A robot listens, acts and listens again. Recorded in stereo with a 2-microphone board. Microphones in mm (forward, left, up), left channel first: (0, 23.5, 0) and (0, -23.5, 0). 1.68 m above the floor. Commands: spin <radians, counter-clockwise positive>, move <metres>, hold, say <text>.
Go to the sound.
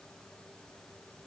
hold
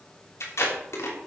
spin 1.57
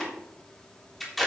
move 1.0
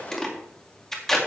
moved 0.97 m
spin 0.17
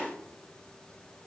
hold
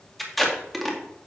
move 1.0
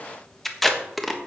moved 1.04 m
move 1.0
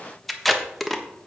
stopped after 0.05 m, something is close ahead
say I am next to the tape being pulled.